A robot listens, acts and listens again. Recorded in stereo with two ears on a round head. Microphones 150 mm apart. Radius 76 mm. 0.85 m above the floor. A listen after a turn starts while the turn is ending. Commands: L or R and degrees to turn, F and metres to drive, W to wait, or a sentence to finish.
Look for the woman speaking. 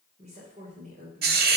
R50
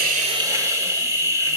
W
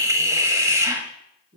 R55
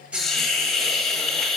W
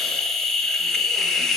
W
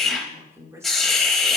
R15
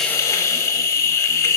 W
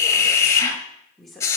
Found it: a woman speaking, straight ahead, 2 to 4 m away.